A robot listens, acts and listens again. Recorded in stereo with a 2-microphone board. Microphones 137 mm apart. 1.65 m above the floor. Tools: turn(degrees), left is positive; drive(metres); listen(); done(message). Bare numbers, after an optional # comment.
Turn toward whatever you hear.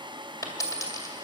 # The dropped coin: about 25° left or 155° left.
turn(25)
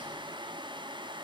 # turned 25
listen()
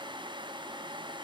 done("I heard a dropped coin, but can't make it out now. It was about straight ahead or 130° left.")